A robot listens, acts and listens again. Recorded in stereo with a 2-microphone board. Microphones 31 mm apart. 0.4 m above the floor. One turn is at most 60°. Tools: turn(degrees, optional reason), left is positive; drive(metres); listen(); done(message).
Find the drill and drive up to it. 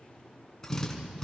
turn(degrees=15, reason="The drill: about 15° left or 165° left.")
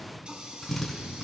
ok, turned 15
drive(metres=1.0)
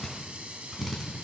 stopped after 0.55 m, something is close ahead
done("Something is in my way. I am facing the drill but have not reached it.")